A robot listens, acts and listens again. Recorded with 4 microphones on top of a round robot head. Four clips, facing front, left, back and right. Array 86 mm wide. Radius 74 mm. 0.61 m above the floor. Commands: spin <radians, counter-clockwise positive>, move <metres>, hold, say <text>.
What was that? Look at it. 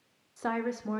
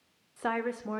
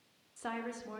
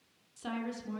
spin 0.96
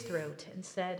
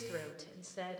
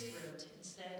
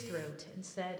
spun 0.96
say Found it: a woman speaking, straight ahead, 2 to 4 m away.